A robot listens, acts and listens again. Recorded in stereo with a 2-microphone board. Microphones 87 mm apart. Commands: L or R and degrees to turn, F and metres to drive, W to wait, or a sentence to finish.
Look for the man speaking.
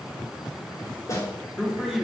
R30
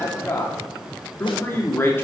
L25
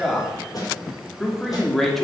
Facing the man speaking.